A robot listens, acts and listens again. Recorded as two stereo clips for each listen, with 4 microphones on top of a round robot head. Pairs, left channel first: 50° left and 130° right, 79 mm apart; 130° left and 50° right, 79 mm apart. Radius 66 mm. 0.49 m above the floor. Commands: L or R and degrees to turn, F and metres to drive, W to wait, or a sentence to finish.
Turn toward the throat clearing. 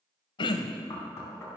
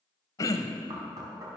L80
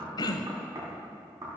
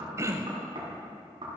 L10
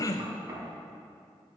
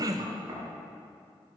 Found it: throat clearing, straight ahead, under 1 m away.